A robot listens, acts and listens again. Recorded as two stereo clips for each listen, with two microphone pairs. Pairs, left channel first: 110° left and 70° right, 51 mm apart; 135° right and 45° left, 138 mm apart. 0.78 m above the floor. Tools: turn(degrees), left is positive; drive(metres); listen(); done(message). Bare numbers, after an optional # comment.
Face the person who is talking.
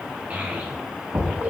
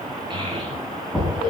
# The child speaking: 10° right.
turn(-10)
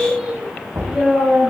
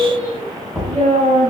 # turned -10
done("Facing the child speaking, over 4 m away.")